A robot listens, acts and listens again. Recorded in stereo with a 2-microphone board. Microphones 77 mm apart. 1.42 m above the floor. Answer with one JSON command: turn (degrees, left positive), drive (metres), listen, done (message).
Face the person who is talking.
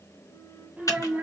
{"turn": -20}
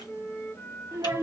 {"turn": -140}
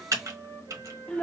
{"turn": 15}
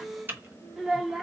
{"done": "Facing the child speaking."}